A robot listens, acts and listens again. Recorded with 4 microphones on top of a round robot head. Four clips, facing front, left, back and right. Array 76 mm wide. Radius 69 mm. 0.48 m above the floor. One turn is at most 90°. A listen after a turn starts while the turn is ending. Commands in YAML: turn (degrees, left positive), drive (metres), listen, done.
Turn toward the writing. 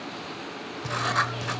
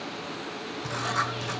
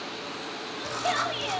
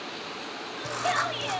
turn: -10
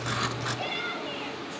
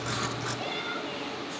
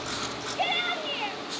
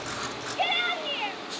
done: "Facing the writing, 1 to 2 m away."